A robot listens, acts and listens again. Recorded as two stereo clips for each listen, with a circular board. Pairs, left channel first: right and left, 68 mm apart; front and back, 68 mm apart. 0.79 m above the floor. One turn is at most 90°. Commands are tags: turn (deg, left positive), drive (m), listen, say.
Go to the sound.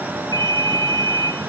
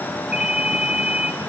<turn deg="-90"/>
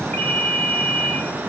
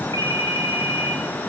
<turn deg="-25"/>
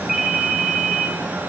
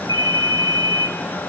<turn deg="10"/>
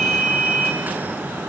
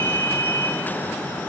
<drive m="1.0"/>
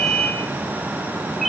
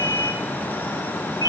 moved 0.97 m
<drive m="1.0"/>
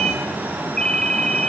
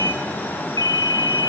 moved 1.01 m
<turn deg="-10"/>
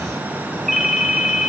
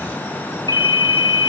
<drive m="1.0"/>
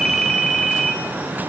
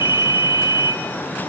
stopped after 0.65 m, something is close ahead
<say>Arrived at the ringtone, straight ahead.</say>